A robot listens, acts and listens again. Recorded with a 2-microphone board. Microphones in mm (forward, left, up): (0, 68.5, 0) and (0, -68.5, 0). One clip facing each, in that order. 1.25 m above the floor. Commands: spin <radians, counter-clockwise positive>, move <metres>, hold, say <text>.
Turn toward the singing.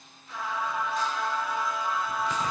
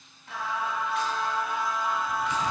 spin -1.22
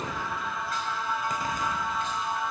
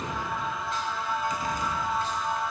spin -0.70
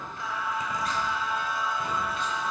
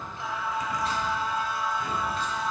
spin -0.61
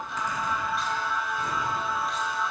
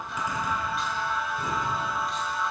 say Facing the singing.